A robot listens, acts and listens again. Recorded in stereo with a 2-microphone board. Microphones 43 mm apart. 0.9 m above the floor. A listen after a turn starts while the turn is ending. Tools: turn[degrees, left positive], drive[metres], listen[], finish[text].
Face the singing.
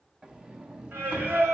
Thought: The singing: about 65° right or 115° right.
Action: turn[-65]
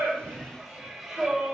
Action: finish[Found it: singing, straight ahead.]